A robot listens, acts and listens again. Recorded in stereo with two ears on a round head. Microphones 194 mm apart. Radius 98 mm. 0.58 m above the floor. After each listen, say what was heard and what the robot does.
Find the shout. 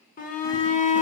The shout: about 40° left or 140° left. Turn 40° left.
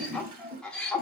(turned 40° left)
Found it: a shout, straight ahead.